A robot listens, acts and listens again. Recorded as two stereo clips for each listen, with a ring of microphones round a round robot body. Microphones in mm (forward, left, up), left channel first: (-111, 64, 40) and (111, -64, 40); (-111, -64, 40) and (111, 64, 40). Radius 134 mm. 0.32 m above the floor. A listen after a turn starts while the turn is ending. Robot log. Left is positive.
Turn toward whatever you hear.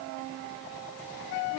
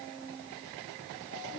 cmd idle
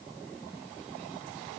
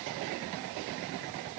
cmd idle
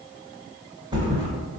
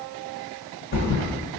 note: The thud: 100° right.
cmd yaw -100
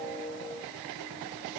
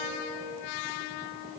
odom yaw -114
note: Nothing new. It was at 15° left.
cmd yaw +15
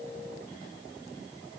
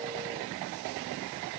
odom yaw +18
end: Facing where the thud came from. I can't hear it now.